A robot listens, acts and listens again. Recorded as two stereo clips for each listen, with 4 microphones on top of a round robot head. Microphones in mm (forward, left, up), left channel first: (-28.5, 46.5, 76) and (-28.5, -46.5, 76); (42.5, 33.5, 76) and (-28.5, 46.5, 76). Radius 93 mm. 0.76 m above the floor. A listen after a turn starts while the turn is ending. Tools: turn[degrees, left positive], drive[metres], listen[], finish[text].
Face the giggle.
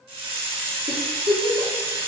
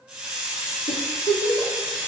Thought: The giggle: 35° right.
Action: turn[-35]
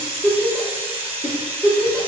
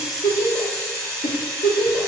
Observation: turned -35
Action: finish[Facing the giggle, 1 to 2 m away.]